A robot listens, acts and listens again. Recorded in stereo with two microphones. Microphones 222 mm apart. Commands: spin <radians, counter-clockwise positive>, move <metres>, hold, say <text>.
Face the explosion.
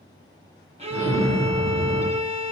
spin 1.57
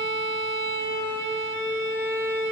say I heard an explosion from this way, but can't make it out now.